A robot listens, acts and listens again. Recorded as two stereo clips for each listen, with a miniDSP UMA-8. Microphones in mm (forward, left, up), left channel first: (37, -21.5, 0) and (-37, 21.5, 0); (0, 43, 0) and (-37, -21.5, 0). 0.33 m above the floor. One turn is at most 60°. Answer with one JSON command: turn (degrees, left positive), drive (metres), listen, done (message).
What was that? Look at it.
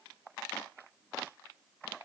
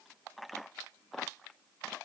{"listen": true}
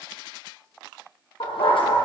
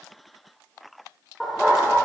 {"turn": -35}
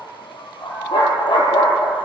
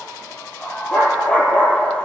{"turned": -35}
{"turn": -15}
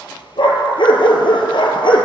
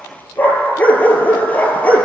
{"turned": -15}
{"turn": -10}
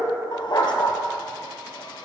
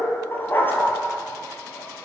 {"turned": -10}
{"done": "Found it: a dog barking, straight ahead."}